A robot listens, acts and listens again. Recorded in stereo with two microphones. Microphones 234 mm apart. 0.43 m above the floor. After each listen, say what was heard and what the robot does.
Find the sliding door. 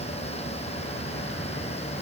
Keep listening.
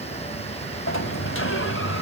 The sliding door: about 60° left or 120° left. Turn 60° left.
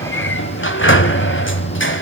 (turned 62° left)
So it is at 55° left. Turn 55° left.
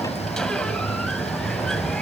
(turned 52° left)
Facing the sliding door.